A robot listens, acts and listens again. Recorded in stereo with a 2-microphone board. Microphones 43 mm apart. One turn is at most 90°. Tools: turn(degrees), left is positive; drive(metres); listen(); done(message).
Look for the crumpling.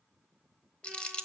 turn(degrees=25)
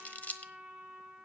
turn(degrees=90)
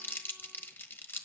turn(degrees=75)
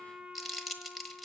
done("Facing the crumpling, 1 to 2 m away.")